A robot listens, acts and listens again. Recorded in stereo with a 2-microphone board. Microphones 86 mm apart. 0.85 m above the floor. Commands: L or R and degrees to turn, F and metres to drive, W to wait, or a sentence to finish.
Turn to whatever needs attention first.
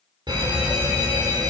R55
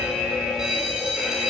Facing the fire alarm.